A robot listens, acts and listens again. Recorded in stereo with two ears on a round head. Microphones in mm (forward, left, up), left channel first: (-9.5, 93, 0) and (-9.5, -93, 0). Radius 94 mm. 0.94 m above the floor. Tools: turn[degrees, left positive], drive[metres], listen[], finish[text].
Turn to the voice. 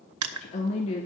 Thought: The woman speaking: about 30° left or 150° left.
Action: turn[30]
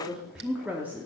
Thought: So it is at 10° right.
Action: turn[-10]
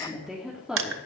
Action: finish[Found it: a woman speaking, straight ahead.]